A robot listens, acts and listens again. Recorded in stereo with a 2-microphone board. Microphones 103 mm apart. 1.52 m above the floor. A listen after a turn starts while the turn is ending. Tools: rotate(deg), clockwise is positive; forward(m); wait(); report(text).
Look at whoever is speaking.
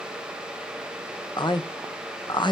rotate(-45)
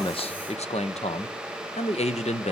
rotate(-90)
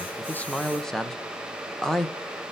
report("Facing the man speaking.")